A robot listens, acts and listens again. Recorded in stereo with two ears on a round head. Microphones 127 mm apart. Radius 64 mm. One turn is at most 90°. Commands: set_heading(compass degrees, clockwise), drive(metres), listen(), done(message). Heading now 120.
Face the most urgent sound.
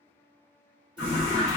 set_heading(90)
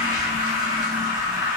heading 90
set_heading(115)
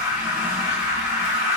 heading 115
set_heading(135)
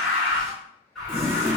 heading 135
done("Facing the alarm, 1 to 2 m away.")